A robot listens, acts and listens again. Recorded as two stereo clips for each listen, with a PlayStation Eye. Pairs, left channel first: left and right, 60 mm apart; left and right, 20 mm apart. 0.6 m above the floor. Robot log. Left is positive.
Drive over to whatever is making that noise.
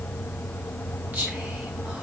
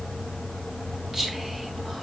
note: The whispering: about 30° right or 150° right.
cmd yaw -30
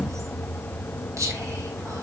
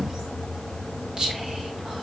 note: So it is at 120° right.
cmd yaw -120
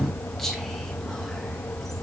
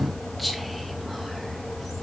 cmd idle
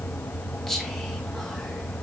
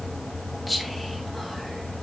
cmd fwd 1.0
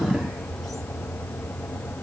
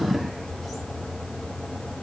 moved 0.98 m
cmd idle
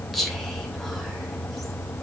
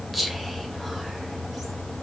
cmd fwd 1.0
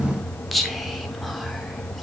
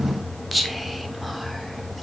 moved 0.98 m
cmd fwd 1.0
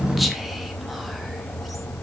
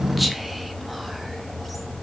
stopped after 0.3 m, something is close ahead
cmd idle
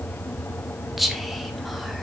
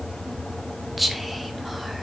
end: I am next to the whispering.